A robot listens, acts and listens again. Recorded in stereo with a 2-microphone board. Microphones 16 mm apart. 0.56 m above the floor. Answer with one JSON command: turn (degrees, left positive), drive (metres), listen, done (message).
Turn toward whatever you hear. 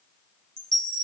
{"turn": 60}
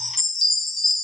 {"turn": 10}
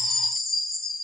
{"done": "Facing the chime, 1 to 2 m away."}